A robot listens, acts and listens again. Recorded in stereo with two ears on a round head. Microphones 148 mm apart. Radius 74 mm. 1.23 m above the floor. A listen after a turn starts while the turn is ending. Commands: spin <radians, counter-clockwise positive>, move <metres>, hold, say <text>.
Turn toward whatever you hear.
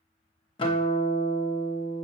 spin 0.52
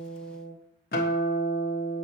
spin 2.01
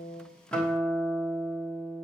say Facing the guitar.